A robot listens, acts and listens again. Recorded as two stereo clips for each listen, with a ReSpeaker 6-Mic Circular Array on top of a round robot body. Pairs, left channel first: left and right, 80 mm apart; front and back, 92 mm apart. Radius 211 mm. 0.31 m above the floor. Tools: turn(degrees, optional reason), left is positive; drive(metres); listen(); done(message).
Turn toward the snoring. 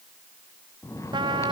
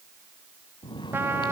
turn(degrees=40, reason="The snoring: 40° left.")
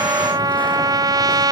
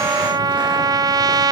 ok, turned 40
listen()
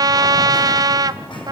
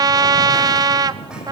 turn(degrees=20, reason="The snoring is now 20° left.")
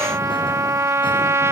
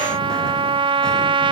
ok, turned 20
listen()
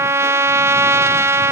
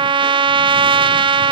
listen()
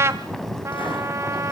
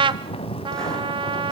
done("Found it: snoring, straight ahead.")